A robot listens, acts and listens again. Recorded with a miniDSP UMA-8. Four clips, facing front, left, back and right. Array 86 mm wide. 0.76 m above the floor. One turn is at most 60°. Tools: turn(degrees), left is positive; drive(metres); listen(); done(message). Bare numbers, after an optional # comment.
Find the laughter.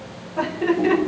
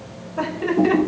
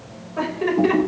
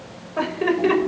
# The laughter: 105° right.
turn(-60)
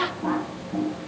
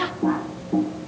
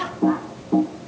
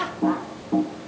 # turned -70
# The laughter is now 35° right.
turn(-35)
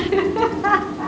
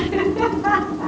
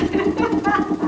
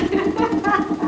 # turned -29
# The laughter is now 10° right.
turn(-10)
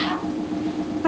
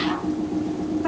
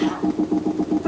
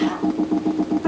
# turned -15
listen()
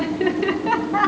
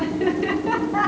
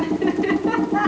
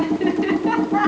# The laughter is now 10° right.
turn(-10)
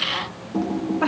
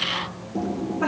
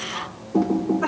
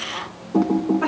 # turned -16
# The laughter is now 10° right.
turn(-10)
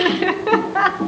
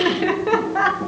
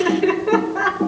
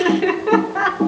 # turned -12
done("Found it: laughter, straight ahead, 1 to 2 m away.")